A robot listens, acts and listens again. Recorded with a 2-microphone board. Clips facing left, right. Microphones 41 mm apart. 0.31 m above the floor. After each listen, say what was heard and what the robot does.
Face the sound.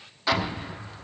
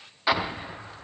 The explosion: about 15° right or 165° right. Turn 15° right.
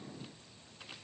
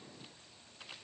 Keep listening.
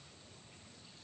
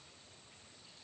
I heard an explosion, but can't make it out now. It was about straight ahead or 150° right.